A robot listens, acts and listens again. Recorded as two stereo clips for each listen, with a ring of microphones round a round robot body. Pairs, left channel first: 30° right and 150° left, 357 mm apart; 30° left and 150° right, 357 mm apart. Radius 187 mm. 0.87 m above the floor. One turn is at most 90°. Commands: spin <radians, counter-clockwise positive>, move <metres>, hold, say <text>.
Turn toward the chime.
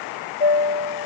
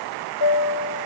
say Facing the chime.